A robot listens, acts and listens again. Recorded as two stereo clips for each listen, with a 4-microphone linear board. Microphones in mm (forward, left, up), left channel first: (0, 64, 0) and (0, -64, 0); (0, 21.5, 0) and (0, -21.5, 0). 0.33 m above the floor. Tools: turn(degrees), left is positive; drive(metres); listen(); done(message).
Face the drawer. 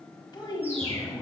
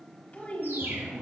turn(degrees=30)
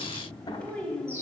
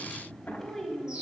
turn(degrees=140)
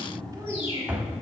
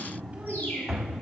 turn(degrees=-15)
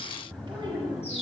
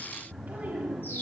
done("Facing the drawer, under 1 m away.")